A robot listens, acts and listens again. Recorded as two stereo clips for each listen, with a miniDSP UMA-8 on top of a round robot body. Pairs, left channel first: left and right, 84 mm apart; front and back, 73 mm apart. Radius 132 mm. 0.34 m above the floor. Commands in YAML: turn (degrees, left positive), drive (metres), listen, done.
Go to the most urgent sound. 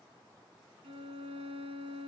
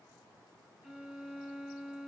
listen: true
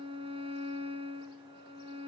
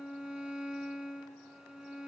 listen: true
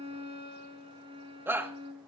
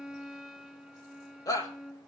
turn: -25
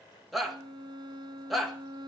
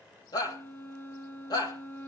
drive: 1.0
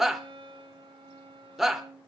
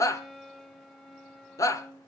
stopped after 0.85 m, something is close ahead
done: "Arrived at the shout, straight ahead."